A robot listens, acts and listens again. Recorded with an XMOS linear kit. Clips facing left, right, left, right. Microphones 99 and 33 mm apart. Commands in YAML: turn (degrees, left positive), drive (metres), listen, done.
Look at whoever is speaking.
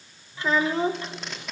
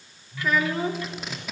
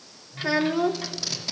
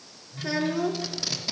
turn: 30
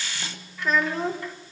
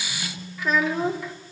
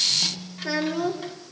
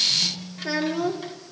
done: "Found it: a child speaking, straight ahead, 1 to 2 m away."